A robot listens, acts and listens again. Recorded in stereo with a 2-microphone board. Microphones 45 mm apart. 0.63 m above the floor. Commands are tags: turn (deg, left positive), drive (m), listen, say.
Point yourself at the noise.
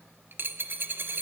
<turn deg="-50"/>
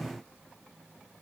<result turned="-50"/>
<listen/>
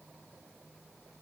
<say>I heard a dropped coin, but can't make it out now. It was about straight ahead or 80° right.</say>